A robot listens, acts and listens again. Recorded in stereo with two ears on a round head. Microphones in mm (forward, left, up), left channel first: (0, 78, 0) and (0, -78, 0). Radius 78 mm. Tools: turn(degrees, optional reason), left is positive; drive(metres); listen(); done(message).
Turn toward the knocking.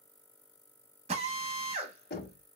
turn(degrees=55, reason="The knocking: about 55° left or 125° left.")
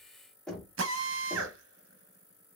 done("Facing the knocking.")